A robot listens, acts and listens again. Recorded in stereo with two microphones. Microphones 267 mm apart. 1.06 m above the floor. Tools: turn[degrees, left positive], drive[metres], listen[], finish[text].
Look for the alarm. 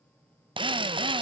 Action: listen[]
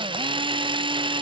Action: listen[]
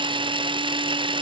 Action: finish[I can't make out an alarm, only a drill.]